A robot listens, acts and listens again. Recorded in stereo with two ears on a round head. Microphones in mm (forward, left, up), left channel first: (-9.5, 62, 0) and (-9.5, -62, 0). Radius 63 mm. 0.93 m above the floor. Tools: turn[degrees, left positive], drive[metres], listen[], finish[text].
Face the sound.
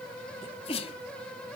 Thought: The sneeze: about 40° left or 140° left.
Action: turn[40]
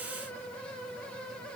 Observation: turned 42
Action: listen[]
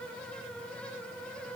Action: finish[I heard a sneeze, but can't make it out now. It was about straight ahead or 95° left.]